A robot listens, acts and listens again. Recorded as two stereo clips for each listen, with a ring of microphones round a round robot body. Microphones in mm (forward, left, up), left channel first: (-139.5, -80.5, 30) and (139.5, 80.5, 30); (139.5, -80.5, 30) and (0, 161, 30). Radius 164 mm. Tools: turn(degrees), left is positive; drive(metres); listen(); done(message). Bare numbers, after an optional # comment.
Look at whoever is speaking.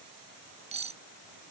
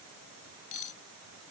listen()
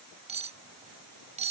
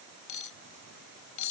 listen()
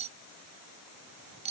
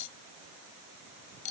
done("I can't make out anyone speaking to turn to.")